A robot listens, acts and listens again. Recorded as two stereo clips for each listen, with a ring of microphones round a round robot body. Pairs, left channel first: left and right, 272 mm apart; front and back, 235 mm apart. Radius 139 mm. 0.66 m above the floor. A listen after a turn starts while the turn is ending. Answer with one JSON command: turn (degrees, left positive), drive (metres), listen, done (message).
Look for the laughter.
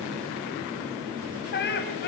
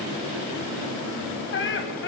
{"turn": 40}
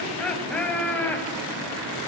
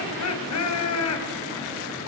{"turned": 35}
{"done": "Found it: laughter, straight ahead."}